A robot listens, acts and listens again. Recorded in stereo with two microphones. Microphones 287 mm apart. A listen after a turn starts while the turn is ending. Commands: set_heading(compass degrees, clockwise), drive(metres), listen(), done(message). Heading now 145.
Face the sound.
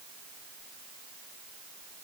listen()
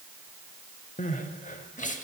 set_heading(115)
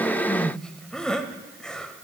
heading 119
done("Found it: crying, straight ahead.")